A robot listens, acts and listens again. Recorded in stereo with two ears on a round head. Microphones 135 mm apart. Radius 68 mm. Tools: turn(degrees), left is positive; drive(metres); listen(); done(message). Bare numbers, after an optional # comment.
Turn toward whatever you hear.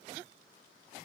listen()
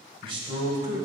# The man speaking: about 25° right or 155° right.
turn(-25)
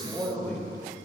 # So it is at 10° left.
turn(10)
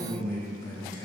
# The man speaking is now 25° left.
turn(25)
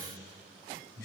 # The man speaking is now 25° left.
turn(25)
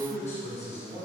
# The man speaking is now 20° left.
turn(20)
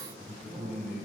done("Facing the man speaking.")